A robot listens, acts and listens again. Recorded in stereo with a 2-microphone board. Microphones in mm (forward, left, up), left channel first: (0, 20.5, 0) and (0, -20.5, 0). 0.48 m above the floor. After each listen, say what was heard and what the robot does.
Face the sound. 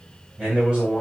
The man speaking: about 25° right or 155° right. Turn 25° right.
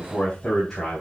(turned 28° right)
So it is at 10° left. Turn 10° left.
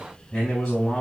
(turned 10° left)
Facing the man speaking.